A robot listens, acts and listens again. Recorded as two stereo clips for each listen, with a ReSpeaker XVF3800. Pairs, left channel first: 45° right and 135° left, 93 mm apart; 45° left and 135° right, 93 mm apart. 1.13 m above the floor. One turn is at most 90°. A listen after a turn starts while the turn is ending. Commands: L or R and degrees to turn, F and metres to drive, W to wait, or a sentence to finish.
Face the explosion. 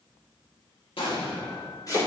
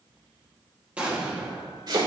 R60
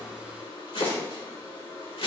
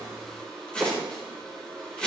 Facing where the explosion came from. I can't hear it now.